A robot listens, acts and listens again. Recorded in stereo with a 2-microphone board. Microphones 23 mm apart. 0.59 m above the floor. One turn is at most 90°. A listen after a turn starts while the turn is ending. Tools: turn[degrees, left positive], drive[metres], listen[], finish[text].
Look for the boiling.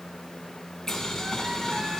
Thought: The boiling: about 25° left or 155° left.
Action: turn[25]
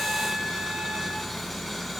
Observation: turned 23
Action: finish[Found it: boiling, straight ahead.]